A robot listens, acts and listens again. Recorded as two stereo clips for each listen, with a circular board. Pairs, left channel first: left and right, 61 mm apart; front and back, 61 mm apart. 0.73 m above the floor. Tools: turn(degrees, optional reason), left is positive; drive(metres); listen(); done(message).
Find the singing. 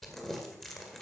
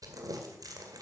listen()
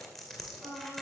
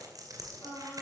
done("Facing the singing, over 4 m away.")